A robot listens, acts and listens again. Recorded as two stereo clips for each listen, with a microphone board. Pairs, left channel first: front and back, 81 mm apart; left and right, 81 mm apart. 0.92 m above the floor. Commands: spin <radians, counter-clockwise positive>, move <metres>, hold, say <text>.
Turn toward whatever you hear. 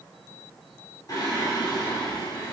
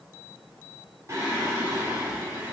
spin -0.52
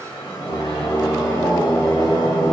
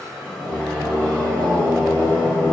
spin 0.35
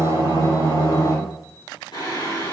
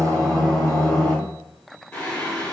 spin 0.26
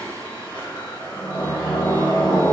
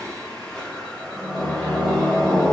say Facing the singing.